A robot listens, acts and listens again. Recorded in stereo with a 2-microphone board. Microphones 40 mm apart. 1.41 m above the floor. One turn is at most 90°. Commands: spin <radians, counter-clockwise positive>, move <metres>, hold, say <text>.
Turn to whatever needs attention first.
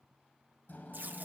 hold
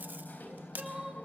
spin -0.35
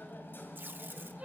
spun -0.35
spin -1.57
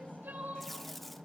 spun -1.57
spin -0.79
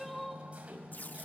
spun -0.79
say Found it: crying, straight ahead, over 4 m away.